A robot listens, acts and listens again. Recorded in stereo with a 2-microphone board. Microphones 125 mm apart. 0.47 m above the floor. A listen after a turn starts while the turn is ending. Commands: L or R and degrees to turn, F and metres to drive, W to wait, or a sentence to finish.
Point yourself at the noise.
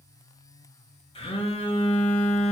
L45
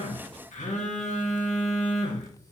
L90
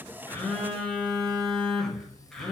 Facing the phone buzzing.